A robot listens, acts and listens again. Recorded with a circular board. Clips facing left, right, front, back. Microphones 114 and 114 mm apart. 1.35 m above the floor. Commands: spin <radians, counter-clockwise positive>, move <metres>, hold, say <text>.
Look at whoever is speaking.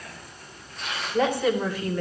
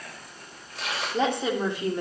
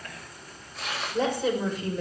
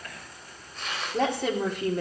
spin -2.71
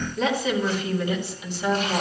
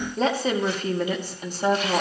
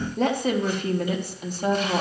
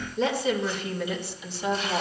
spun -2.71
spin -0.79
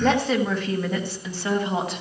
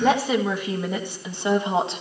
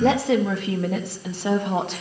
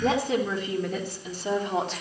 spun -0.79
spin -0.44
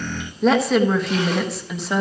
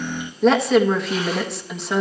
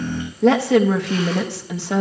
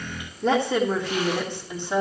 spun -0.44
say Facing the woman speaking, 1 to 2 m away.